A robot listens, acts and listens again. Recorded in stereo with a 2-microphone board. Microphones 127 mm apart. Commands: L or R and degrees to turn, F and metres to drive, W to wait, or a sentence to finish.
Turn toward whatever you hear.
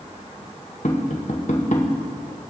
L75
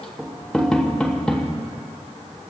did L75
Facing the tapping, 2 to 4 m away.